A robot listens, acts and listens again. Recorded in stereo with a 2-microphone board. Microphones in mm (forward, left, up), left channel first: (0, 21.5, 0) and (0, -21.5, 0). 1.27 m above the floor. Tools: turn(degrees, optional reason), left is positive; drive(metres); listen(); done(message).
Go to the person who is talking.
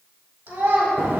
turn(degrees=-70, reason="The child speaking: about 70° right or 110° right.")
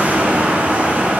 listen()
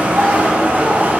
listen()
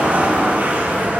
done("I heard a child speaking, but can't make it out now. It was about straight ahead or 40° right. I did not reach it.")